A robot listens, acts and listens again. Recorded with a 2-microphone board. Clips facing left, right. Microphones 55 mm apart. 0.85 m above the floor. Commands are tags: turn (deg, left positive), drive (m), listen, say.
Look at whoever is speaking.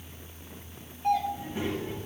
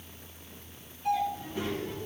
<turn deg="20"/>
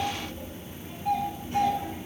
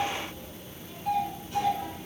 <turn deg="140"/>
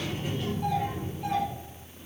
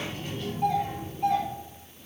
<turn deg="10"/>
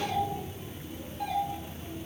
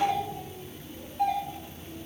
<say>Facing the child speaking, 2 to 4 m away.</say>